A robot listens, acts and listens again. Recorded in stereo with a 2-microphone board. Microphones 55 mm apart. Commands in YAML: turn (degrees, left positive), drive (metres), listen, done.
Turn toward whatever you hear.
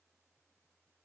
listen: true
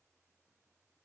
listen: true
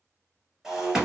turn: -30
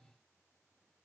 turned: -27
listen: true
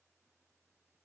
done: "I heard breaking glass, but can't make it out now. It was about 15° left or 140° right."